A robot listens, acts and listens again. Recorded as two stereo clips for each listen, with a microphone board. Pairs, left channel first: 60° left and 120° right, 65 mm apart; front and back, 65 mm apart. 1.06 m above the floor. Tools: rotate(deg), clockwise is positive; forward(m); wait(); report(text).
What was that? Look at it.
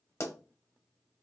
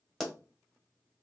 rotate(-90)
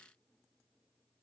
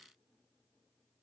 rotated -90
report("Facing where the pop came from. I can't hear it now.")